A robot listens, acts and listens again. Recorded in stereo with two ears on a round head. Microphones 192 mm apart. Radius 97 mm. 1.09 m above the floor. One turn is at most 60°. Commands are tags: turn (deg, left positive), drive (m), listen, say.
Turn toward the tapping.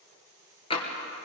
<turn deg="25"/>
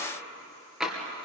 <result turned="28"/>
<say>Found it: tapping, straight ahead, 2 to 4 m away.</say>